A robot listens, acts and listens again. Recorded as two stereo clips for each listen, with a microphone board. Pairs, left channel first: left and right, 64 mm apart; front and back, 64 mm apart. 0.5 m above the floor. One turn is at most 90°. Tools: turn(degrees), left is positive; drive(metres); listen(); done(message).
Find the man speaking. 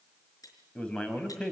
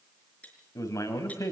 turn(degrees=15)
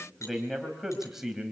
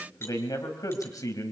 turn(degrees=-10)
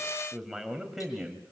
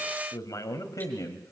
turn(degrees=-10)
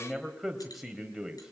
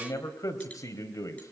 turn(degrees=-10)
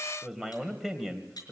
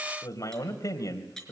done("Facing the man speaking.")